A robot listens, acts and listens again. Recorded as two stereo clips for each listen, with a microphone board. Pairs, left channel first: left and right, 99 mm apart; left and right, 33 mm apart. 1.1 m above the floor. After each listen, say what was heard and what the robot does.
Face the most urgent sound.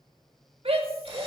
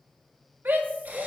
The shout: about 65° right or 115° right. Turn 65° right.
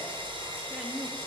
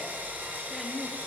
Keep listening.
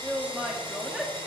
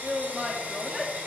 Facing the shout, 1 to 2 m away.